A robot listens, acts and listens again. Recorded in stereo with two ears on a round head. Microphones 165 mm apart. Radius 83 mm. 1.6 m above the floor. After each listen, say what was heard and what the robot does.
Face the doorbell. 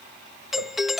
Turn 30° left.
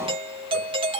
So it is at 30° right. Turn 30° right.
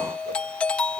Found it: a doorbell, straight ahead.